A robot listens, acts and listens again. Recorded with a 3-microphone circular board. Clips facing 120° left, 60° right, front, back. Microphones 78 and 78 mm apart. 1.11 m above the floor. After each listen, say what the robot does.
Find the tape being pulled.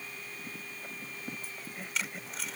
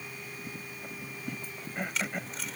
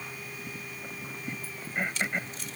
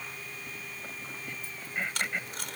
Turn 150° right.
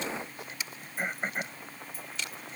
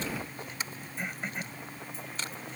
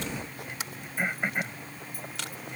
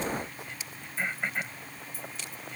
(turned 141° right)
Turn 10° right.
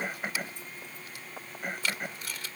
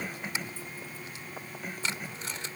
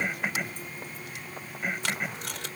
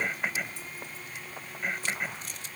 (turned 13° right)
Found it: tape being pulled, straight ahead.